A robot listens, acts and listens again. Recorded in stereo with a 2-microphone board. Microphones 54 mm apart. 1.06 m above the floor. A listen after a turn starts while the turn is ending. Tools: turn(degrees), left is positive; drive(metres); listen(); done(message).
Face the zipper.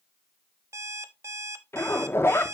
turn(degrees=45)
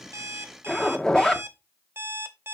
turn(degrees=15)
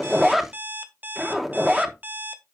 done("Facing the zipper.")